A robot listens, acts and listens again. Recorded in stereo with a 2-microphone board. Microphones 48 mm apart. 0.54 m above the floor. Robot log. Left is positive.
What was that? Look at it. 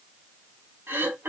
note: The throat clearing: about 60° right or 120° right.
cmd yaw -60
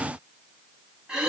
note: So it is at 20° right.
cmd yaw -20
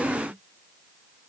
cmd idle
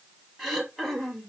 end: Found it: throat clearing, straight ahead.